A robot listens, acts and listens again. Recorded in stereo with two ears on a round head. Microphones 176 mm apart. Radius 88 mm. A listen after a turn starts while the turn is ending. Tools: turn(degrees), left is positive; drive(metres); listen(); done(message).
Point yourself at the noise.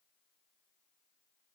listen()
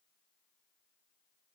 listen()
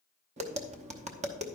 turn(degrees=-35)
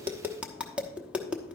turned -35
done("Facing the tapping, under 1 m away.")